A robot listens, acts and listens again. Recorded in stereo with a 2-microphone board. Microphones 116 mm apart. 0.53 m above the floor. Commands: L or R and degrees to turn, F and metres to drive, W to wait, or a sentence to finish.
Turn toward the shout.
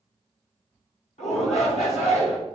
L65
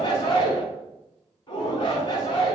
L40
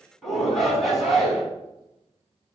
Found it: a shout, straight ahead, over 4 m away.